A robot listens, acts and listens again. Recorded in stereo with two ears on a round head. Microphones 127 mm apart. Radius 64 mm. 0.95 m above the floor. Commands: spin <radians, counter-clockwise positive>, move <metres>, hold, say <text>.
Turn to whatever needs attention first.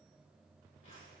hold
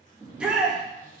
spin -0.52
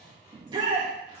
spin -2.53
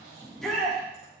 say Found it: a shout, straight ahead.